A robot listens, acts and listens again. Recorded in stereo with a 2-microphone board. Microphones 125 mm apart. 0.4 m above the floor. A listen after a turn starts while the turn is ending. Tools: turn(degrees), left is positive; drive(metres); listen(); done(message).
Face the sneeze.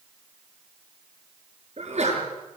turn(degrees=-65)
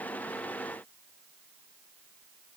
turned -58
listen()
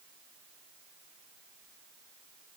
done("I heard a sneeze, but can't make it out now. It was about 5° right or 55° right.")